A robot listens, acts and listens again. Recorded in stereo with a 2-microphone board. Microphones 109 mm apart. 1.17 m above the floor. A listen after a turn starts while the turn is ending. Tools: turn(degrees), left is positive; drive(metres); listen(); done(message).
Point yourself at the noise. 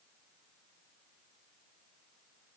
listen()
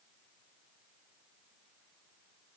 listen()
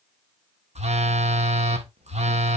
turn(degrees=-90)
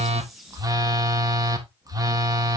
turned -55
turn(degrees=-35)
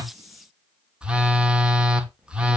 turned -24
turn(degrees=-10)
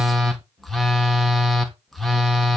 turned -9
done("Found it: a phone buzzing, straight ahead, 1 to 2 m away.")